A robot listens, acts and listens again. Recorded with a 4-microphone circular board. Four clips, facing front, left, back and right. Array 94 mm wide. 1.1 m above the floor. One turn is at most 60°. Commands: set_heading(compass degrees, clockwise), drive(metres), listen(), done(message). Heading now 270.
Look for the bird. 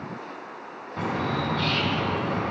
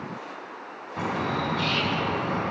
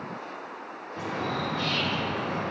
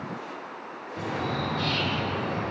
set_heading(215)
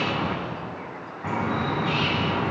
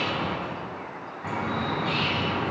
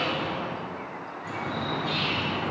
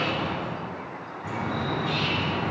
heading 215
set_heading(195)
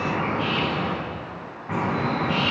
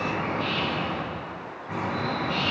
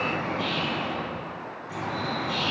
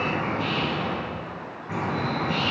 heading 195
done("Facing the bird, 2 to 4 m away.")